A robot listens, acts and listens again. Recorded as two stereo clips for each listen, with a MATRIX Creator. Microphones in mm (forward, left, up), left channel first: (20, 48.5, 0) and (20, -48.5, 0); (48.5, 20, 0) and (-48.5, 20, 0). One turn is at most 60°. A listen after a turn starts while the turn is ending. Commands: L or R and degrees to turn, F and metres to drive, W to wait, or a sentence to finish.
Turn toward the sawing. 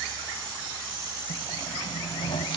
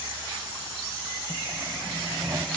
L60
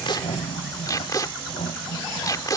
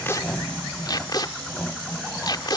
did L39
L60
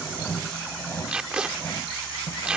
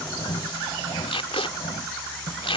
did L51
L30
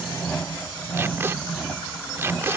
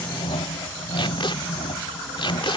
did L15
L10
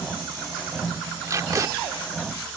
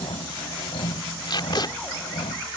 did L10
Facing the sawing.